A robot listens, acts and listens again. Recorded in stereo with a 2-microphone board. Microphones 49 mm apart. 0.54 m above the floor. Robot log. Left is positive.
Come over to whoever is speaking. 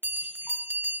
cmd idle
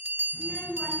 note: The child speaking: about 45° left or 135° left.
cmd yaw +45
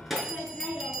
cmd fwd 1.0
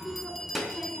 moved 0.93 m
cmd fwd 1.0
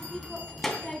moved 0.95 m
cmd fwd 1.0
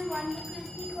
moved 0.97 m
cmd fwd 1.0
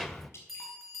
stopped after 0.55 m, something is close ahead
end: I am next to the child speaking.